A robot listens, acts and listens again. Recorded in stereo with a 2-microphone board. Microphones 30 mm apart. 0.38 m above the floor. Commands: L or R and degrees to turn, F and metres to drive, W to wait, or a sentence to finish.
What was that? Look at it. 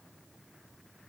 W
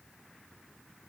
W
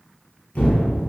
L60
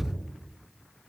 L60
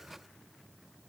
I heard an explosion from this way, but can't make it out now.